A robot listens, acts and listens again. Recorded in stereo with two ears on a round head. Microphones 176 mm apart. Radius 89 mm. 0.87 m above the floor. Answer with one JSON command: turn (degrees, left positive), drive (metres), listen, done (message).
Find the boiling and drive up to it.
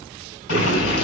{"turn": 90}
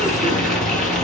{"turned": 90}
{"drive": 1.0}
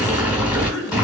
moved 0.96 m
{"drive": 1.0}
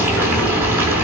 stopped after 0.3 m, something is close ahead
{"turn": -10}
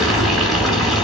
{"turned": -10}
{"done": "I am next to the boiling."}